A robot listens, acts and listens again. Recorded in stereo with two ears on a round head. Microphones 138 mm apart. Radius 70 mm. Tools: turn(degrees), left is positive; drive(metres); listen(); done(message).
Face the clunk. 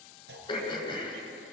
turn(degrees=-90)
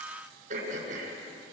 done("Facing where the clunk came from. I can't hear it now.")